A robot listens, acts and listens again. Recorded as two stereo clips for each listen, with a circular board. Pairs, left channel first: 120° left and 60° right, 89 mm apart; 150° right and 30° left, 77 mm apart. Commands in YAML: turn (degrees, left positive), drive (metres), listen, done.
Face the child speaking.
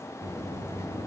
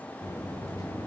listen: true
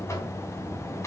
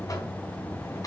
listen: true
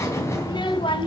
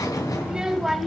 turn: 120
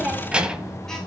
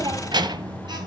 turn: 20
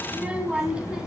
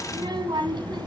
turn: 20
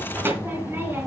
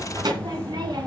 done: "Facing the child speaking, 2 to 4 m away."